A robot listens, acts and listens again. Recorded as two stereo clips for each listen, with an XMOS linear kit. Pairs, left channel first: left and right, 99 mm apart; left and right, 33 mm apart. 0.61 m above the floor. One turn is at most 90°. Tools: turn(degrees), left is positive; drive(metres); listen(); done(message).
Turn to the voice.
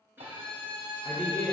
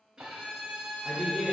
turn(degrees=30)
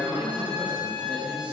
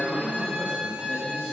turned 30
turn(degrees=-15)
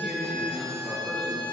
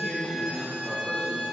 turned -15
done("Found it: a man speaking, straight ahead.")